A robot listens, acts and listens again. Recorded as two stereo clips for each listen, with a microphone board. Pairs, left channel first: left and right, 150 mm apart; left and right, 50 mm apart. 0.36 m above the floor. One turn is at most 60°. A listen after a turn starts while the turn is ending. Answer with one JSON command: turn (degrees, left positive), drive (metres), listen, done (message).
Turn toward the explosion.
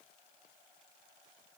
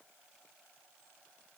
{"listen": true}
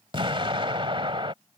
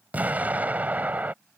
{"turn": -35}
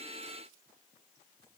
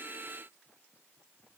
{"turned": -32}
{"listen": true}
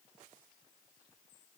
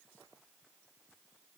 {"done": "I heard an explosion, but can't make it out now. It was about 5° right or 115° right."}